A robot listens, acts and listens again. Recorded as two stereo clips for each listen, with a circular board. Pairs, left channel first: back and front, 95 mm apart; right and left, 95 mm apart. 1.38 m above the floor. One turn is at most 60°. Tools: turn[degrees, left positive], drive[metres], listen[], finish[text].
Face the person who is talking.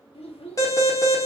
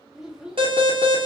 Thought: The child speaking: 175° left.
Action: turn[60]
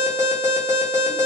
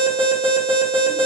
Thought: Nothing new. It was at 115° left.
Action: turn[60]
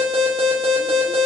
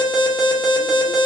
Thought: Nothing new. It was at 55° left.
Action: turn[55]
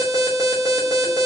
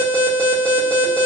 Action: finish[Facing where the child speaking came from. I can't hear it now.]